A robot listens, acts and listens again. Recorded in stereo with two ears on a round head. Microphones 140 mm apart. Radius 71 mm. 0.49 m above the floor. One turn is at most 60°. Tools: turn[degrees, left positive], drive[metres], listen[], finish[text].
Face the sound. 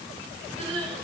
Thought: The crying: about 40° right or 140° right.
Action: turn[-40]
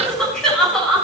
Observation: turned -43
Action: finish[Found it: crying, straight ahead.]